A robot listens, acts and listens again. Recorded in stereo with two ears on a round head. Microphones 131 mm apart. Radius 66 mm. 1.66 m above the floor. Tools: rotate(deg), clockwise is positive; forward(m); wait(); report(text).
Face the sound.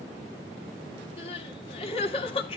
rotate(-40)
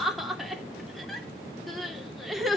report("Facing the crying, 2 to 4 m away.")